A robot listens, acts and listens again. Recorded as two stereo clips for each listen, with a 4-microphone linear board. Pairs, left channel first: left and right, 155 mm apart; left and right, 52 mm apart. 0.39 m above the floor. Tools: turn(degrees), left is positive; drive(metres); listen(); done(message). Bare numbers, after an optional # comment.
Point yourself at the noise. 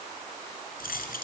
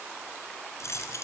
# The keys jangling: about 70° left or 110° left.
turn(70)
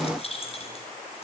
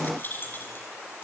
# So it is at 40° left.
turn(40)
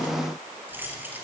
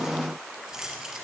# The keys jangling is now 10° right.
turn(-10)
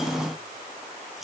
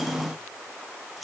listen()
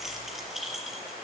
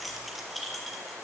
done("Found it: keys jangling, straight ahead.")